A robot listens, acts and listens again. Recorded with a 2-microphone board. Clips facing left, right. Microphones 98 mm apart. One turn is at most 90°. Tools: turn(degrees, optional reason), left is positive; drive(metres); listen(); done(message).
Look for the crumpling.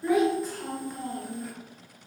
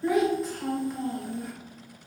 listen()
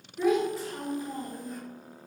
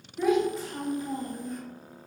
listen()
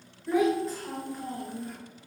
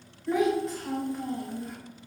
done("I can't make out crumpling, only a child speaking.")